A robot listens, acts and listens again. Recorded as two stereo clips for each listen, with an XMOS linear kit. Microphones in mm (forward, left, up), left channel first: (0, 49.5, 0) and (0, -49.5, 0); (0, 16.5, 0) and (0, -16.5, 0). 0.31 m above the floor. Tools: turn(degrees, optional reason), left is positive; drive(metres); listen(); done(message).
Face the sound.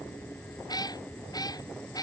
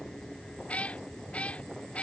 turn(degrees=40, reason="The cat meowing: about 40° left or 140° left.")
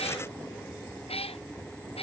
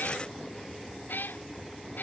turn(degrees=105, reason="So it is at 105° left.")
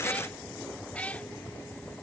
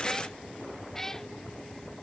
turn(degrees=15, reason="The cat meowing is now 15° left.")
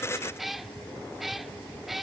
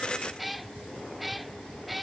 done("Facing the cat meowing.")